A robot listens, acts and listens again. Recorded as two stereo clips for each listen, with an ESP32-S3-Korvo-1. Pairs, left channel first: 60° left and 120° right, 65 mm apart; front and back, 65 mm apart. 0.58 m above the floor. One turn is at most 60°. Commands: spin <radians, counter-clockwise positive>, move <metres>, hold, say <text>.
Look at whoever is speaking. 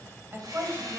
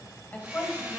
spin -1.05
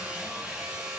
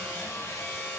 hold
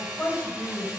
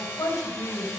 say Facing the woman speaking.